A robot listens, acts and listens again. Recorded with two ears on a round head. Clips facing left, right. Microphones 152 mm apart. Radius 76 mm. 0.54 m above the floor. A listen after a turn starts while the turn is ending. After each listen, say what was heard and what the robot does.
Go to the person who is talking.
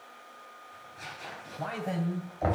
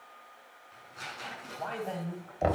Turn 30° left.
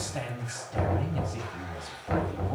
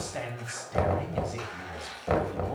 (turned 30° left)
So it is at 15° right. Turn 15° right.
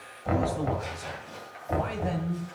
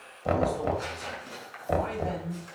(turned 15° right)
Drive 1.0 m forward.
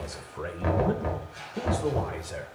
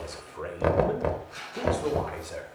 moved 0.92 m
Drive 1.0 m forward.
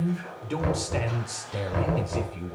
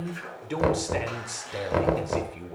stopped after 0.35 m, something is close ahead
Arrived at the man speaking, straight ahead.